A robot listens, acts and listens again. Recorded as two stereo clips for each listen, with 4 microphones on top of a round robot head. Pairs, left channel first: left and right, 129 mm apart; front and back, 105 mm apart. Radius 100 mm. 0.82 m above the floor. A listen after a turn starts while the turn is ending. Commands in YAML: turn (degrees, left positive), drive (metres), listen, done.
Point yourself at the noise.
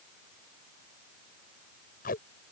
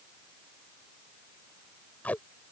turn: 75
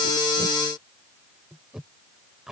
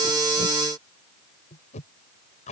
done: "Found it: tape being pulled, straight ahead."